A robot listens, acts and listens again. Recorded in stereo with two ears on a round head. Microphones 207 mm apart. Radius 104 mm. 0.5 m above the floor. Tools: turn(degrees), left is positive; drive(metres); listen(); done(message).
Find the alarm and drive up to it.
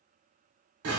listen()
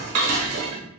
listen()
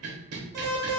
turn(degrees=-40)
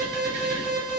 turn(degrees=-100)
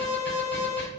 turn(degrees=10)
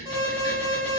drive(metres=1.0)
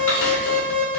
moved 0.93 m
drive(metres=1.0)
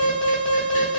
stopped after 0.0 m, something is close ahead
done("Arrived at the alarm, straight ahead.")